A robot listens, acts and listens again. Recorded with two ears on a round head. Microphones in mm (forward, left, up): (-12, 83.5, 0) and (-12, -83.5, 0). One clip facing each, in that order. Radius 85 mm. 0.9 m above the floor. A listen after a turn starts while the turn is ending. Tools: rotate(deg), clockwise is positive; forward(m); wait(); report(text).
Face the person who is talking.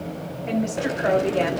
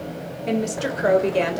rotate(35)
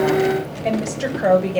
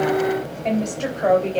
rotate(-10)
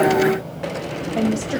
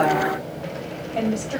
rotate(-10)
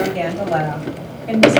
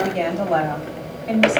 report("Facing the woman speaking.")